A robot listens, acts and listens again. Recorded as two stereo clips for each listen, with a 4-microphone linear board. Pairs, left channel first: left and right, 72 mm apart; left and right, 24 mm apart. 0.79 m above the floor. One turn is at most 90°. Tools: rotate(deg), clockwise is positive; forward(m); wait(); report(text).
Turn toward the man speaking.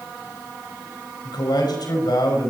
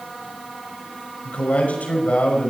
rotate(-90)
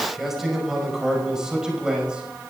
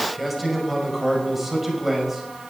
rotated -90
rotate(10)
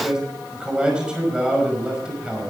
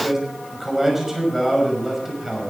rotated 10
rotate(10)
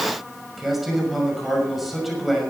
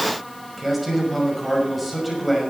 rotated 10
report("Found it: a man speaking, straight ahead.")